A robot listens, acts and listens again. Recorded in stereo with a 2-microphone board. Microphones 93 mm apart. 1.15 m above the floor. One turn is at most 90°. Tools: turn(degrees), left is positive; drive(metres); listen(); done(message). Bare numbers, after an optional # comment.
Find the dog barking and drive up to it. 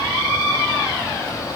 listen()
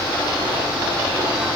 listen()
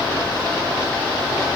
done("I can't make out a dog barking to turn to.")